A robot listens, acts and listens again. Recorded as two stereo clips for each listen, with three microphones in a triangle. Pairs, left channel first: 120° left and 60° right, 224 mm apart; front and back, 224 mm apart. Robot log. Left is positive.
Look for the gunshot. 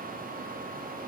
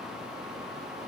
cmd idle
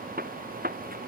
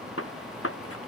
note: The gunshot: 10° right.
cmd yaw -10
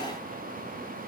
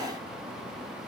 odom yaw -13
end: I heard a gunshot from this way, but can't make it out now.